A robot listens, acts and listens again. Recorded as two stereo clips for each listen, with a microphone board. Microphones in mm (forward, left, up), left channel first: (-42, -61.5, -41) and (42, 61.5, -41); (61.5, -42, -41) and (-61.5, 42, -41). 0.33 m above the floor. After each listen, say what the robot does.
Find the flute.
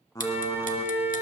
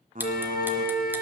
Turn 20° right.
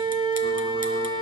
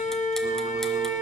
Facing the flute, 1 to 2 m away.